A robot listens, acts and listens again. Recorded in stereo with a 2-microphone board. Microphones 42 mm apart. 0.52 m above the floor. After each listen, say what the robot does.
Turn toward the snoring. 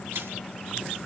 Keep listening.
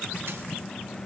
Keep listening.
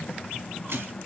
I can't make out snoring to turn to.